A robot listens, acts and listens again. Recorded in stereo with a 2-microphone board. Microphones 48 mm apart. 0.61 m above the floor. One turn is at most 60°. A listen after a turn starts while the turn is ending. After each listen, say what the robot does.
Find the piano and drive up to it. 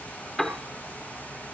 Turn 30° left.
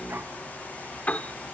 Turn 60° left.
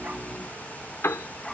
Turn 60° left.
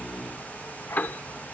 Turn 45° left.
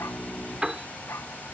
Turn 15° right.
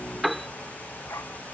Drive 1.0 m forward.
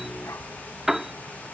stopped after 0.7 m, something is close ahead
Turn 10° right.
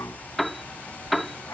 Arrived at the piano, straight ahead.